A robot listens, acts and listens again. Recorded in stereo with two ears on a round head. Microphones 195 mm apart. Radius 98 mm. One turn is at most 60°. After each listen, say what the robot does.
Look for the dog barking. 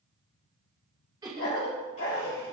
Turn 60° left.
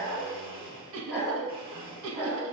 Facing the dog barking.